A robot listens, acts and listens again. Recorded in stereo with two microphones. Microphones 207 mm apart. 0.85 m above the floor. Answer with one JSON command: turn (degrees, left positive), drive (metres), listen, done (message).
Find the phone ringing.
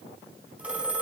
{"turn": -30}
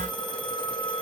{"turn": 20}
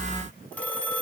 {"done": "Found it: a phone ringing, straight ahead."}